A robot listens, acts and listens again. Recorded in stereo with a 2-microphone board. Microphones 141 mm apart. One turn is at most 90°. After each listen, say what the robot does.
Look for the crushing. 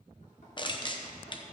Turn 35° left.
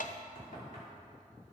Turn 90° left.
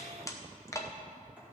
Turn 20° left.
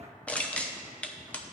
Turn 10° left.
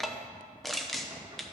Found it: crushing, straight ahead, under 1 m away.